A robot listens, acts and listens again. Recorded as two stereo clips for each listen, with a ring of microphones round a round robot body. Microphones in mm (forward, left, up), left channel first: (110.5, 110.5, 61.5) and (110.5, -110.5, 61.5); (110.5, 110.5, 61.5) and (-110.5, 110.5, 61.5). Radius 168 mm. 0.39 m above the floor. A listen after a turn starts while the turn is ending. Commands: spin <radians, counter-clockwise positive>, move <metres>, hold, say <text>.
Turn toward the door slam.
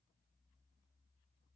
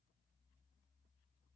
hold
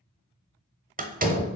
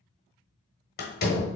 spin -0.70
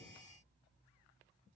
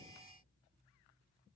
say I heard a door slam from this way, but can't make it out now.